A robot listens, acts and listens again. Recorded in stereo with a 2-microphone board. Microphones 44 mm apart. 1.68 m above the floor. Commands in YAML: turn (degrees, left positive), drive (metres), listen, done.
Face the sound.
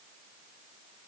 listen: true
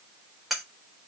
turn: -30
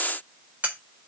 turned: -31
turn: -145
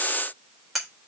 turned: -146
done: "Found it: cutlery clinking, straight ahead, 2 to 4 m away."